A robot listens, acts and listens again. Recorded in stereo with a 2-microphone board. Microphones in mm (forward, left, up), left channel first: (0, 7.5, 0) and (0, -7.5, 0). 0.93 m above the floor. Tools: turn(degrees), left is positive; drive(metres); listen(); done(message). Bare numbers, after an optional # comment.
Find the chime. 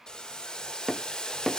listen()
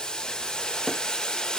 listen()
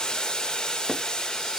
done("I can't make out a chime to turn to.")